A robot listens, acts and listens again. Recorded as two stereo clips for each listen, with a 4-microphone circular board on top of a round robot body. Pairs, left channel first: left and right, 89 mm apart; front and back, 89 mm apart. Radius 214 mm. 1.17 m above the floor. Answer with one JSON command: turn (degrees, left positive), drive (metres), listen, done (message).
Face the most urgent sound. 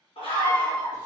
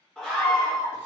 {"turn": 85}
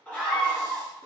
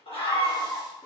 {"turn": 15}
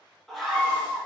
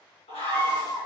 {"done": "Found it: a scream, straight ahead, over 4 m away."}